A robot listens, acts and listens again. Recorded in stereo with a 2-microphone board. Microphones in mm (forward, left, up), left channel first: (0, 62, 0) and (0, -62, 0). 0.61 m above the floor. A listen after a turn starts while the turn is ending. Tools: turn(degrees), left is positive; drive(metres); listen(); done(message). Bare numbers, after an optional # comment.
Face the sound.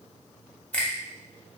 turn(30)
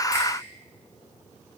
listen()
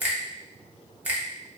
# So it is at 15° right.
turn(-15)
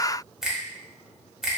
done("Found it: a finger snap, straight ahead, 1 to 2 m away.")